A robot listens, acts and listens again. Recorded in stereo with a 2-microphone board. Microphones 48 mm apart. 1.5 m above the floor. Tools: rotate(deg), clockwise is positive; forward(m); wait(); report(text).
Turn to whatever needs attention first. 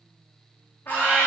rotate(-45)
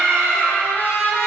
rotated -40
rotate(-95)
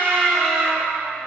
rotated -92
report("Found it: a scream, straight ahead.")